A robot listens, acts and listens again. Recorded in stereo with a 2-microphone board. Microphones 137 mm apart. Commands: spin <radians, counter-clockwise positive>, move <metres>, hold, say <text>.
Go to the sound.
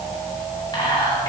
spin 0.52
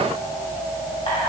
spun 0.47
hold
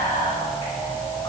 spin 2.01
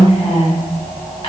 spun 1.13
spin 0.87
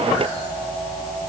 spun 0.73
spin 0.17
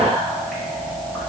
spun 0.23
hold
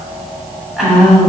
move 1.0
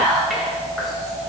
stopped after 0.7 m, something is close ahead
say I am next to the whispering.